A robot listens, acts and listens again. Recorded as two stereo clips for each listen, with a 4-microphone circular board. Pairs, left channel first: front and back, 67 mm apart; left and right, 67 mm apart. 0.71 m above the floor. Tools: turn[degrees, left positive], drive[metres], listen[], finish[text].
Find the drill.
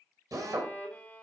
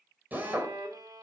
Thought: The drill: 155° right.
Action: turn[-155]
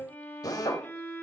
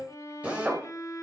Thought: The drill is now 20° right.
Action: turn[-20]
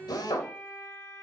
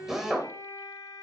Action: finish[Facing the drill, 2 to 4 m away.]